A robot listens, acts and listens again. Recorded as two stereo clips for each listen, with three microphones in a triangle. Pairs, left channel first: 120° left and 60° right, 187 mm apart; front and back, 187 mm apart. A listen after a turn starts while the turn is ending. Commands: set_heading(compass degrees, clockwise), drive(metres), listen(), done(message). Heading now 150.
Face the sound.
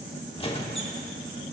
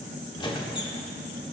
set_heading(90)
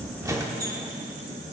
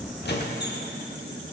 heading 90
set_heading(75)
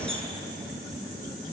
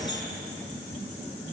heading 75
done("Found it: a squeak, straight ahead.")